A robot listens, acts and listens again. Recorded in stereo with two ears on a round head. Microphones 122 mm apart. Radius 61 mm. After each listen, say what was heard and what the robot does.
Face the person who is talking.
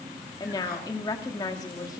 The woman speaking: about 30° left or 150° left. Turn 30° left.
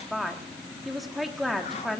Facing the woman speaking, 1 to 2 m away.